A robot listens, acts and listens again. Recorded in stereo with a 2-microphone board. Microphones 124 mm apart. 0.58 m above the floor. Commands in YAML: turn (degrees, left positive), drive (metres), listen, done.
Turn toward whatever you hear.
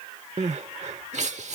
turn: -70
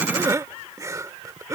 turn: -30
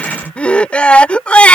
turn: 10
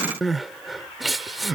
done: "Found it: crying, straight ahead."